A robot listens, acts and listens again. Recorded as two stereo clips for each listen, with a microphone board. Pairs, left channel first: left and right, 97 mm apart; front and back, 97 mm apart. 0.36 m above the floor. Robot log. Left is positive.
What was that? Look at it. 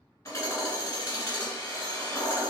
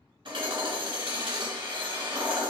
note: The hammering: 150° left.
cmd yaw +150
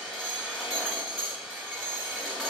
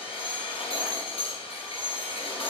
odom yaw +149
end: Found it: hammering, straight ahead.